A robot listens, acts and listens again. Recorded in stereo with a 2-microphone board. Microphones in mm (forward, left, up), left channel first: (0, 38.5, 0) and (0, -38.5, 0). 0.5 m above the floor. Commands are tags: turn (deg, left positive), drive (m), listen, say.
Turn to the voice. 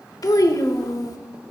<turn deg="50"/>
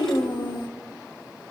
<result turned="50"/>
<turn deg="75"/>
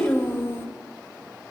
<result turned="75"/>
<turn deg="35"/>
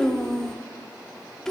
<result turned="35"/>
<turn deg="10"/>
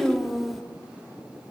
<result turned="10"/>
<say>Facing the child speaking.</say>